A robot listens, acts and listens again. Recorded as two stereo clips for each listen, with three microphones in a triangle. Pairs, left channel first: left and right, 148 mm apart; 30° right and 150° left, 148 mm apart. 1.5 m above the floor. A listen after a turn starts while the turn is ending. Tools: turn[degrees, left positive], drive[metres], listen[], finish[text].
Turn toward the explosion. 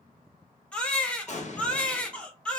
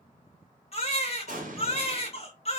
Thought: The explosion: 125° left.
Action: turn[125]
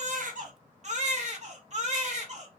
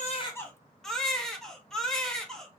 Action: finish[Facing where the explosion came from. I can't hear it now.]